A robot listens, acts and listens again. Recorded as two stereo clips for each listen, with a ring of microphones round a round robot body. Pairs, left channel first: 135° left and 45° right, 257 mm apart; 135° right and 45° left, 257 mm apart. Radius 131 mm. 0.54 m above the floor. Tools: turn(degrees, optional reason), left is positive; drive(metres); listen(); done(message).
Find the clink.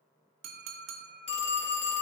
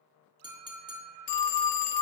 turn(degrees=-30, reason="The clink: 30° right.")
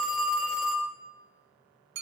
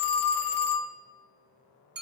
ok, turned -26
done("Found it: a clink, straight ahead.")